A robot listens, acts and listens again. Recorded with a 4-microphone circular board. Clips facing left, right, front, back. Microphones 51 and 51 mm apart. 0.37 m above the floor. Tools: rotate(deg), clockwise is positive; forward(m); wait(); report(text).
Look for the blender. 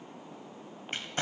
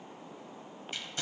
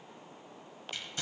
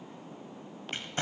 wait()
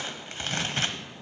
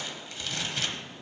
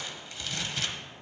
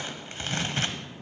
wait()
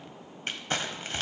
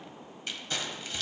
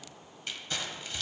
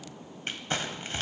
report("I can't make out a blender to turn to.")